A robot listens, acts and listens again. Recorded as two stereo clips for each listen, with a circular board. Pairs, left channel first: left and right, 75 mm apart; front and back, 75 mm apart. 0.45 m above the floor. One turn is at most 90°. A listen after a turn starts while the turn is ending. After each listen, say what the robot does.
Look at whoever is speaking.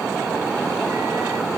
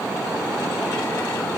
Keep listening.
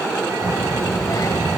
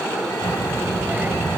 Turn 90° left.
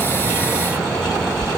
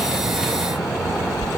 Turn 10° left.
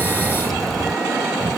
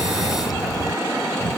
Facing the child speaking.